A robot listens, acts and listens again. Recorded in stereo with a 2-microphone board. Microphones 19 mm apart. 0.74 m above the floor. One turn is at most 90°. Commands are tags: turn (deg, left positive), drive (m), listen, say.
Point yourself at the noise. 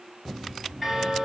<turn deg="30"/>
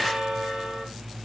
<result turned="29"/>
<turn deg="-30"/>
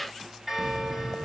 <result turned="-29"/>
<say>Found it: a bell, straight ahead.</say>